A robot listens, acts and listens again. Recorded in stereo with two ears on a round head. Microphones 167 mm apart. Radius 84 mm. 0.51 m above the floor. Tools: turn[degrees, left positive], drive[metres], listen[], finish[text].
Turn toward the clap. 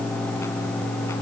Action: listen[]
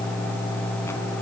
Action: listen[]
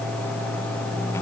Action: finish[I can't make out a clap to turn to.]